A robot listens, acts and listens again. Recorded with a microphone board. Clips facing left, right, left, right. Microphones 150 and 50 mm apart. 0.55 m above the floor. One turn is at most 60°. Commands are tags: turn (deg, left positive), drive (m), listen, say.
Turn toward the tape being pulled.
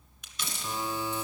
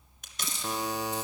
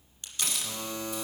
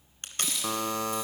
<turn deg="-50"/>
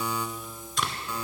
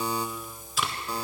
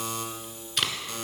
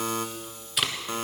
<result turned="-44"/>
<say>Facing the tape being pulled.</say>